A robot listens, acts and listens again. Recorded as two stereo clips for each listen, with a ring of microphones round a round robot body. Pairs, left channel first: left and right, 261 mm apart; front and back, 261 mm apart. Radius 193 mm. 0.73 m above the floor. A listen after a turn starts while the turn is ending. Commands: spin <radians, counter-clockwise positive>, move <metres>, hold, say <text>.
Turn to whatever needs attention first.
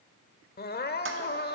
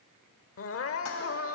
spin 0.61
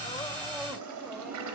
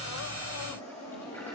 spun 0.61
hold
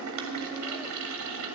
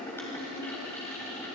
hold
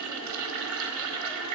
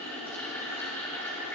say Facing where the crying came from. I can't hear it now.